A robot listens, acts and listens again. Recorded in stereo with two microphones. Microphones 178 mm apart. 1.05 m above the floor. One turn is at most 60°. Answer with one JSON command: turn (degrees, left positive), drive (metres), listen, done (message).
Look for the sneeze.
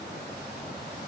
{"listen": true}
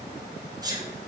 {"turn": -20}
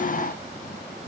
{"listen": true}
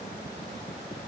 {"done": "I heard a sneeze, but can't make it out now. It was about straight ahead or 140° right."}